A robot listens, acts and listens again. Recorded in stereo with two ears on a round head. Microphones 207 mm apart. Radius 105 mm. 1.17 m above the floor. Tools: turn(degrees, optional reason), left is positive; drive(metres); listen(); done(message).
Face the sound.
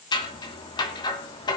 turn(degrees=20, reason="The scissors: about 20° left or 160° left.")
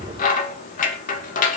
turn(degrees=140, reason="So it is at 140° left.")
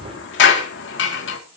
turn(degrees=55, reason="The scissors is now 55° left.")
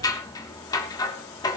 turn(degrees=15, reason="The scissors is now 15° left.")
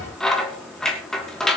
done("Facing the scissors, 2 to 4 m away.")